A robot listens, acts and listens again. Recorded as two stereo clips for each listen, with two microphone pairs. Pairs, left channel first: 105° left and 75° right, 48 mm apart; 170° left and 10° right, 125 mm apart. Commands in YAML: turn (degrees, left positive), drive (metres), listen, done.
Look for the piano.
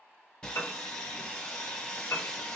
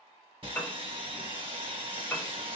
turn: 95
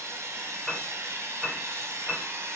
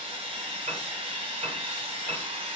done: "Found it: a piano, straight ahead, under 1 m away."